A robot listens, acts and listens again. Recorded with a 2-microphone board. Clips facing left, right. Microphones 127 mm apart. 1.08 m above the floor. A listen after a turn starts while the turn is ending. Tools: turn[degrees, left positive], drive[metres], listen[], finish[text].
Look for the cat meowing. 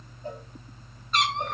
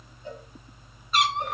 Action: turn[-30]
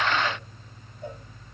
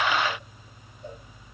Action: listen[]
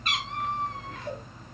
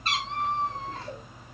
Thought: So it is at 145° right.
Action: turn[-145]
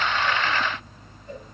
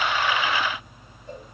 Action: listen[]
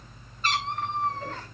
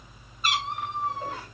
Thought: The cat meowing is now 10° right.
Action: turn[-10]
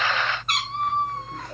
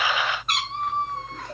Action: finish[Facing the cat meowing, 1 to 2 m away.]